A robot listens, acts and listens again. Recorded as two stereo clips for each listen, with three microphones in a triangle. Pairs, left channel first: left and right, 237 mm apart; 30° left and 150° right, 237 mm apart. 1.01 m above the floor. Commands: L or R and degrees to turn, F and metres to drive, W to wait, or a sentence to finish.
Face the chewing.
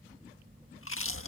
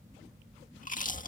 L80
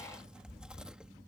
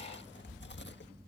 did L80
Facing the chewing.